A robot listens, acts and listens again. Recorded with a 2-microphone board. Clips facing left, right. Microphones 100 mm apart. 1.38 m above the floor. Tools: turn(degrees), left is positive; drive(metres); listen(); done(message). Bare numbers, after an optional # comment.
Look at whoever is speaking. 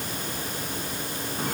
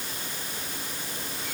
listen()
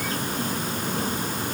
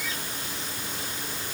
listen()
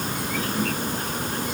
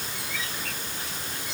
done("I can't make out anyone speaking to turn to.")